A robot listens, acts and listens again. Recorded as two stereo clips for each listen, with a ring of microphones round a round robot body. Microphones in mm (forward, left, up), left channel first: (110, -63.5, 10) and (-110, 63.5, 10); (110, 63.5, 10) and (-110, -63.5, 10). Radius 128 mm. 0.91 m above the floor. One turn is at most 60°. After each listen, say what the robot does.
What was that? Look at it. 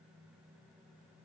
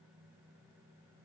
Keep listening.
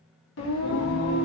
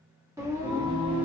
Turn 60° right.
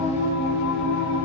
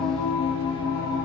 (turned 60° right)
Turn 50° right.
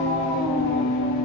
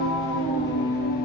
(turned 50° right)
Turn 25° right.
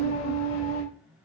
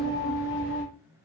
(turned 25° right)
Turn 15° right.
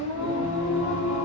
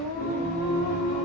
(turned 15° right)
Facing the singing, 1 to 2 m away.